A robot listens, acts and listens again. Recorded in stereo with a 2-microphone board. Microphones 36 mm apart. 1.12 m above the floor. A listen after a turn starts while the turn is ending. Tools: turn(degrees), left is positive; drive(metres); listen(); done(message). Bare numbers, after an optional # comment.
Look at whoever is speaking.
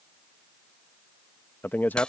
# The man speaking: about 55° left or 125° left.
turn(55)
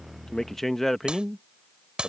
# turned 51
done("Found it: a man speaking, straight ahead.")